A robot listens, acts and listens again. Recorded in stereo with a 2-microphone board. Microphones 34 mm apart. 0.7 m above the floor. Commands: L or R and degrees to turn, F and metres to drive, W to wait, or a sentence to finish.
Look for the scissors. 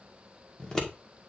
L20
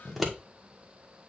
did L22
Found it: scissors, straight ahead.